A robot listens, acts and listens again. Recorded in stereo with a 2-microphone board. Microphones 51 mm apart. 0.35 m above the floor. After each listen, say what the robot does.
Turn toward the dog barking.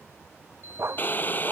Turn 55° right.
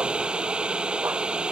Keep listening.
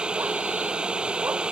Keep listening.
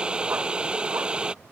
I heard a dog barking, but can't make it out now. It was about straight ahead or 70° right.